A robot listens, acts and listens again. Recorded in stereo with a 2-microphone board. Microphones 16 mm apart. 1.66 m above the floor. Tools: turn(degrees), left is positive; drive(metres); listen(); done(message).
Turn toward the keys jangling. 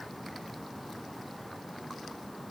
listen()
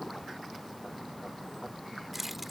turn(degrees=-30)
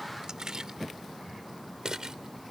turn(degrees=-140)
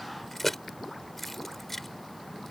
turn(degrees=10)
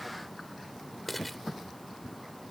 done("Found it: keys jangling, straight ahead.")